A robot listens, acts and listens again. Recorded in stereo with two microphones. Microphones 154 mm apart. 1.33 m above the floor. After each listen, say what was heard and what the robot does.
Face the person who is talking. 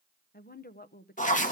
Turn 90° left.
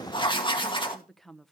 Found it: a woman speaking, straight ahead.